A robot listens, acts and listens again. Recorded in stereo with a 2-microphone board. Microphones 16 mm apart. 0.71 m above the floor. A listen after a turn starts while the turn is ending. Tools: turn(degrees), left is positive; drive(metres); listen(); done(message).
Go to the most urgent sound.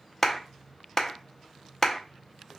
listen()
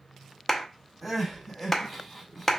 turn(degrees=30)
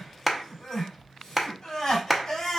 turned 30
turn(degrees=145)
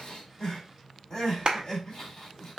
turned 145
turn(degrees=45)
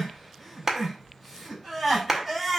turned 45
drive(metres=1.0)
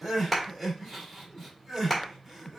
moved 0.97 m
drive(metres=1.0)
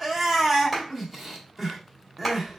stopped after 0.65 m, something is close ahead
done("I am next to the crying.")